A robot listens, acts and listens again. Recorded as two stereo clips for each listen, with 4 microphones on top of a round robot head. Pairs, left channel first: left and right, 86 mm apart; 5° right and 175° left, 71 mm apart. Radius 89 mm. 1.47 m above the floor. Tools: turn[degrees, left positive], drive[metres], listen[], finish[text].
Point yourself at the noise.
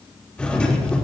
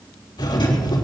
Thought: The doorbell: 10° left.
Action: turn[10]
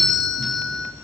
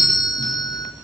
Action: finish[Facing the doorbell, 2 to 4 m away.]